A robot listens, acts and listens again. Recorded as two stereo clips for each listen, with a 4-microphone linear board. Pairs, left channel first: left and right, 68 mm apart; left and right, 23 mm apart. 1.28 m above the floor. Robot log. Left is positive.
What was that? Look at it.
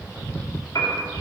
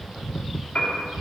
note: The piano: about 60° left or 120° left.
cmd yaw +60
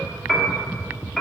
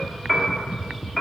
end: Found it: a piano, straight ahead.